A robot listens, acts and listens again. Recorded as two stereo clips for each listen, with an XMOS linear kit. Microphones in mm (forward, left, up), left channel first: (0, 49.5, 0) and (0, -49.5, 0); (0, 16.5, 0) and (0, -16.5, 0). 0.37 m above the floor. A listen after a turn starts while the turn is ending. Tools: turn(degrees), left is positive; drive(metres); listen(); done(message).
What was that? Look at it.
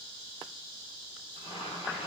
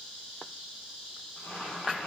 turn(degrees=75)
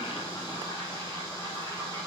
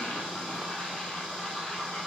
turn(degrees=30)
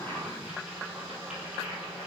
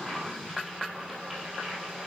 done("Found it: boiling, straight ahead, 2 to 4 m away.")